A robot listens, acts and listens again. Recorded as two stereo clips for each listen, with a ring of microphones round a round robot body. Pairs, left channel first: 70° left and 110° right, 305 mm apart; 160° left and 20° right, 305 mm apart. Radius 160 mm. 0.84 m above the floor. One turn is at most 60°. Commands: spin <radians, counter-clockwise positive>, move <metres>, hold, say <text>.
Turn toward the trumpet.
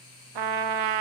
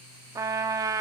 spin -1.05
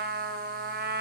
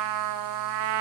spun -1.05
spin -0.87
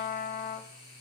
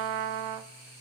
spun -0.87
say Found it: a trumpet, straight ahead.